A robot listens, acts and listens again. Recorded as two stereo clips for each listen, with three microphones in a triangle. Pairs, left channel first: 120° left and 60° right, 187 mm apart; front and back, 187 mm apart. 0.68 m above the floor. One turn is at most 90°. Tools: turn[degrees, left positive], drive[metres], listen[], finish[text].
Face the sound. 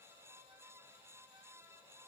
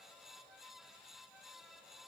Action: listen[]
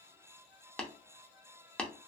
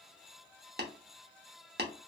Thought: The tapping: 155° right.
Action: turn[-90]
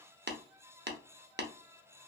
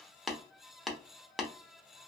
Thought: The tapping is now 90° right.
Action: turn[-90]
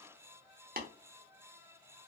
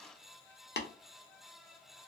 Thought: The tapping is now 25° right.
Action: turn[-25]
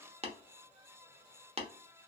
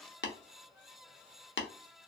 Action: finish[Found it: tapping, straight ahead, under 1 m away.]